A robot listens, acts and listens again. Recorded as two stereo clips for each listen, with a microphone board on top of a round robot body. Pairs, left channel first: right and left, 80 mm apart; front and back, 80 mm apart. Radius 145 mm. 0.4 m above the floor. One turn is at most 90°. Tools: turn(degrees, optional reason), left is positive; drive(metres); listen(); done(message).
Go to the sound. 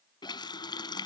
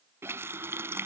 turn(degrees=-90, reason="The running tap: 120° right.")
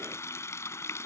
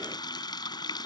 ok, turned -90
turn(degrees=-35, reason="The running tap is now 35° right.")
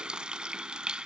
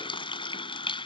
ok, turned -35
turn(degrees=10, reason="The running tap is now 10° left.")
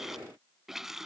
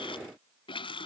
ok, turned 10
drive(metres=1.0)
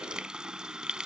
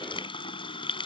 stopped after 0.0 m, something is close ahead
turn(degrees=10, reason="The running tap is now 10° left.")
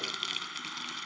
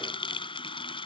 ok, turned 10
done("Blocked. The running tap is further on, straight ahead.")